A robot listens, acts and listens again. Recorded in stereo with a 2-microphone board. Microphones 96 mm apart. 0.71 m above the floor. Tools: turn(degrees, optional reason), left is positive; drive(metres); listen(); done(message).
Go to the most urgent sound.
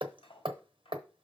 listen()
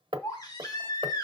turn(degrees=40, reason="The baby crying: about 40° left or 140° left.")
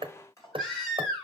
drive(metres=1.0)
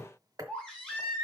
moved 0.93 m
drive(metres=1.0)
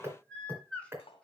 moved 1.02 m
turn(degrees=10, reason="The baby crying is now 10° left.")
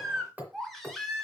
drive(metres=1.0)
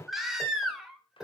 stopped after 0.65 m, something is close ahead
done("Arrived at the baby crying, straight ahead.")